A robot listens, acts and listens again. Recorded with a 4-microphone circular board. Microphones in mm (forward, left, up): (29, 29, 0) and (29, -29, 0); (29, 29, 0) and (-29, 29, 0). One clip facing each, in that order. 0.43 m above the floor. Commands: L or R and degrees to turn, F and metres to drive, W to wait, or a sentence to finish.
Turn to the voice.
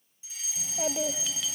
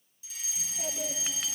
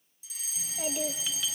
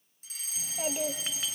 L105
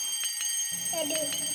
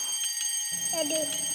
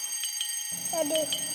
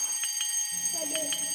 Facing the child speaking, 1 to 2 m away.